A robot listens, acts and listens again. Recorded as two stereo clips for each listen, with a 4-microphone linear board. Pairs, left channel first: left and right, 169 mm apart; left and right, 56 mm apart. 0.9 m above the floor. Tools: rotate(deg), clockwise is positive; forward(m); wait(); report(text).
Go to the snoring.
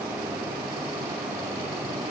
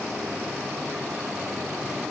wait()
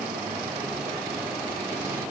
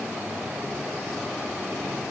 wait()
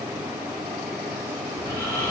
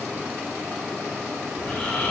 rotate(-20)
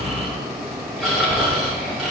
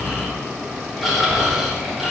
forward(1.0)
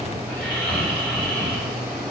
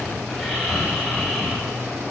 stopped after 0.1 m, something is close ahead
rotate(-10)
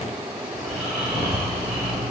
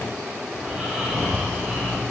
report("Something is in my way. I am facing the snoring but have not reached it.")